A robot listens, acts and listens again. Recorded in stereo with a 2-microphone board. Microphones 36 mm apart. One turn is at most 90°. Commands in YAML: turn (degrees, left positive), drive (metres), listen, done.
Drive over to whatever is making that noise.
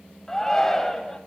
turn: 30
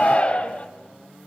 turn: 90
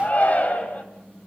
turn: 50
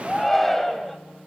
turn: 10
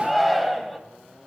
drive: 1.0
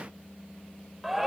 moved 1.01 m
drive: 1.0
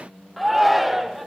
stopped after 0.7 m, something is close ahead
done: "I am next to the shout."